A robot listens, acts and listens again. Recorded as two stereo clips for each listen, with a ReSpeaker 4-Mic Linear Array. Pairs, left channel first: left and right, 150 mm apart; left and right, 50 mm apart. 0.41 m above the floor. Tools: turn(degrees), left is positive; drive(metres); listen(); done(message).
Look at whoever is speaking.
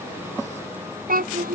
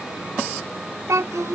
turn(degrees=-90)
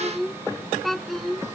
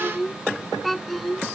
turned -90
done("Facing the child speaking.")